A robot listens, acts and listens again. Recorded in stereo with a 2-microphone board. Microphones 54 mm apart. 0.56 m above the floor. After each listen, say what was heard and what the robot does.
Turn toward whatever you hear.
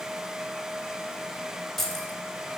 Turn 30° left.
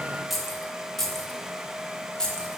Turn 30° left.
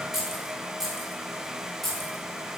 Turn 30° left.
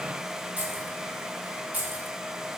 So it is at 35° right. Turn 35° right.
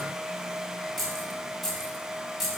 Found it: keys jangling, straight ahead.